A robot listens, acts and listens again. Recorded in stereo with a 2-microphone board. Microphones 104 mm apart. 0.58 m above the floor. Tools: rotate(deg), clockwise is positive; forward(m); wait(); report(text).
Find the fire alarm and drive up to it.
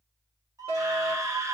rotate(60)
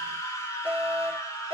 rotate(15)
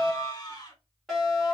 forward(1.0)
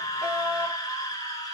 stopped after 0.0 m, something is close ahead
report("Blocked. The fire alarm is further on, straight ahead.")